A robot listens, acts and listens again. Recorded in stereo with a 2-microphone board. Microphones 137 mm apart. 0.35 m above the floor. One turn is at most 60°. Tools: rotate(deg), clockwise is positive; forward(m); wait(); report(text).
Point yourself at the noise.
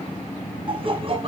rotate(45)
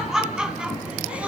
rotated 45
rotate(10)
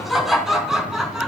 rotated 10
report("Facing the laughter, 2 to 4 m away.")